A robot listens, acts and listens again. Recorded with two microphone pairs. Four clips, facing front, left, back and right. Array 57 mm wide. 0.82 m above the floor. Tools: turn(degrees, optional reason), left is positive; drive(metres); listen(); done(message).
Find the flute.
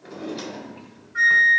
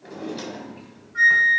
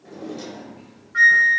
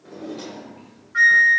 turn(degrees=-135, reason="The flute: 135° right.")
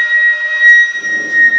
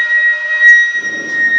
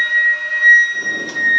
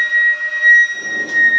turn(degrees=30, reason="The flute is now 30° left.")
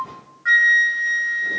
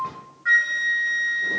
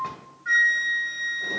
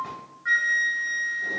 turn(degrees=10, reason="The flute is now 10° left.")
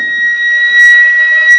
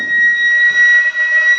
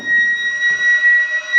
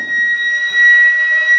done("Found it: a flute, straight ahead.")